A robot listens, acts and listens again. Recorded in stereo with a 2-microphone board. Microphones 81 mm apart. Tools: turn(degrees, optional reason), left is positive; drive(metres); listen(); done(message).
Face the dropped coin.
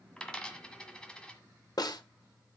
turn(degrees=30)
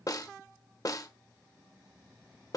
listen()
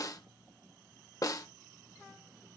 done("I heard a dropped coin, but can't make it out now. It was about 20° right or 140° left.")